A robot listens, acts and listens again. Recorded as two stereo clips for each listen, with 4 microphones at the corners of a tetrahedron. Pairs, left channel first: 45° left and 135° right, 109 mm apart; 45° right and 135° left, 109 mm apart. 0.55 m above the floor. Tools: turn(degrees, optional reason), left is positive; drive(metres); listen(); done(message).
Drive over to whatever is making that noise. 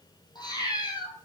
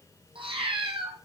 turn(degrees=95, reason="The cat meowing: 95° left.")
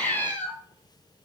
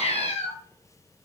turn(degrees=-30, reason="The cat meowing is now 30° right.")
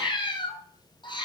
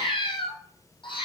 drive(metres=1.0)
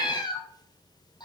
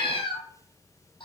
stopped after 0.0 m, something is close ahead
done("Something is in my way. I am facing the cat meowing but have not reached it.")